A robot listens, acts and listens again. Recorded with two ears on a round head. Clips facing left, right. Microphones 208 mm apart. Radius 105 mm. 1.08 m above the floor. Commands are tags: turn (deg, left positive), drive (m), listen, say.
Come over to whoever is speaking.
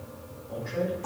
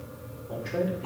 <turn deg="-65"/>
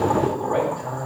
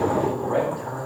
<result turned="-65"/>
<drive m="1.0"/>
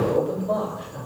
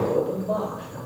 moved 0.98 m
<drive m="1.0"/>
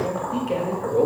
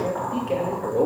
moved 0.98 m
<drive m="1.0"/>
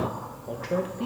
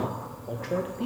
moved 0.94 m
<drive m="1.0"/>
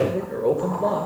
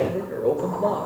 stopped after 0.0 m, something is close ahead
<say>I am next to the man speaking.</say>